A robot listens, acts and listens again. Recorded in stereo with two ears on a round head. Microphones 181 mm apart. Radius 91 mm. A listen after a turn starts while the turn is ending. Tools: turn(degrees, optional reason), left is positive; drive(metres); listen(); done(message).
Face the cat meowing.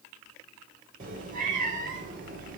turn(degrees=-45, reason="The cat meowing: about 45° right or 135° right.")
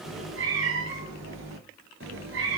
turn(degrees=-70, reason="So it is at 70° right.")
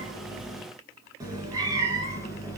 turn(degrees=-20, reason="The cat meowing is now 20° right.")
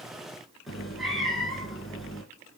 done("Found it: a cat meowing, straight ahead, 2 to 4 m away.")